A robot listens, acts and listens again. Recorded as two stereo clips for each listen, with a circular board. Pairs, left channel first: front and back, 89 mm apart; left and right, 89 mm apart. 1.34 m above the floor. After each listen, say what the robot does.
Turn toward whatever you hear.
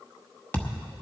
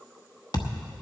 Turn 65° left.
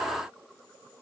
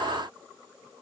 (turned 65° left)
Facing where the thud came from. I can't hear it now.